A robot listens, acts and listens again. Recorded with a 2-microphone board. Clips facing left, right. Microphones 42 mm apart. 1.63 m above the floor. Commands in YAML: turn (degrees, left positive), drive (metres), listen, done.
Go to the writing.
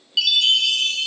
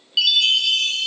listen: true
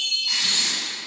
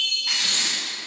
turn: -90
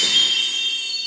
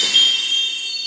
listen: true
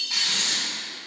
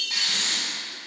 turn: -10
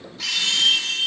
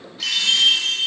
listen: true
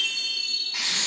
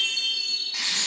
drive: 1.0
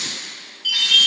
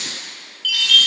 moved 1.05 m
drive: 1.0
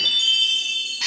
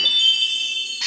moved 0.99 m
drive: 1.0
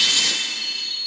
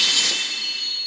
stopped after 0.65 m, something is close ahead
done: "I am next to the writing."